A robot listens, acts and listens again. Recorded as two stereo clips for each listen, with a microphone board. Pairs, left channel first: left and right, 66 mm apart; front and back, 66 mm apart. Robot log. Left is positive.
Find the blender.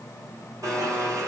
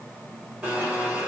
note: The blender: 115° right.
cmd yaw -115
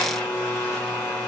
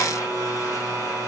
note: The blender is now 15° left.
cmd yaw +15
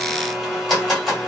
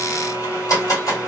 end: Facing the blender.